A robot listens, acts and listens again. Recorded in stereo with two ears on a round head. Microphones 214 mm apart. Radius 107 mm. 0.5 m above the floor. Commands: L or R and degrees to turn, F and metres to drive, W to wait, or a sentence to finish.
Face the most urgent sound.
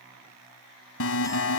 L60
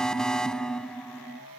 Found it: an alarm, straight ahead.